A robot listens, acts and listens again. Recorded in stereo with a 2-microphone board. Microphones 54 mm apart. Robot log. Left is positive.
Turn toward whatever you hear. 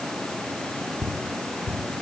note: The ticking: about 30° left or 150° left.
cmd yaw +30
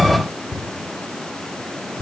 note: So it is at 115° left.
cmd yaw +115
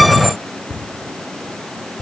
note: The ticking is now 25° left.
cmd yaw +25
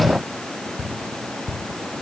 note: The ticking is now 10° right.
cmd yaw -10
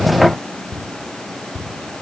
end: Found it: ticking, straight ahead.